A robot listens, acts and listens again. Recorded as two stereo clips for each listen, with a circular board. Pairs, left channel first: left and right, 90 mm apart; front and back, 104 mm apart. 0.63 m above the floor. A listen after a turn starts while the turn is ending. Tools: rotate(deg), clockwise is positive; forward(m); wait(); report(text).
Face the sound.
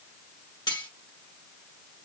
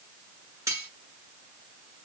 rotate(-120)
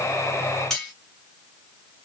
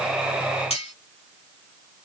report("Facing the cutlery clinking.")